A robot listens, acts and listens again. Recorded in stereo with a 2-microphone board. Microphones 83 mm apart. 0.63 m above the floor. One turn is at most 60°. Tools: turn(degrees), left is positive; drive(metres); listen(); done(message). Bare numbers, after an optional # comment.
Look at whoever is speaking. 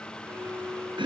listen()
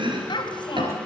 # The child speaking: about 70° left or 110° left.
turn(60)
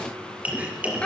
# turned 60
# So it is at 10° left.
turn(10)
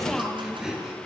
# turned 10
done("Facing the child speaking.")